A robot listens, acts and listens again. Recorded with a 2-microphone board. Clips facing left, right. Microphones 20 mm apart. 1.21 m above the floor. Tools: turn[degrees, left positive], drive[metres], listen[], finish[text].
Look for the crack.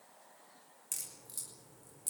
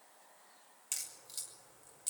Thought: The crack: about 35° right or 145° right.
Action: turn[-35]
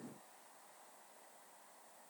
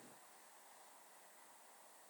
Action: listen[]
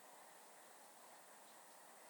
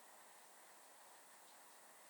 Action: finish[I heard a crack, but can't make it out now. It was about straight ahead or 110° right.]